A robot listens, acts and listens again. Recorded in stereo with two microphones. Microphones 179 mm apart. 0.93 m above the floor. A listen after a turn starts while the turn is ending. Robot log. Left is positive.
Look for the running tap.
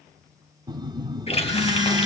note: The running tap: about 35° left or 145° left.
cmd yaw +35
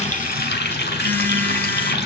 note: So it is at 115° left.
cmd yaw +115
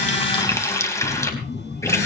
note: The running tap is now 15° left.
cmd yaw +15
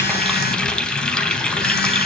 end: Facing the running tap, 2 to 4 m away.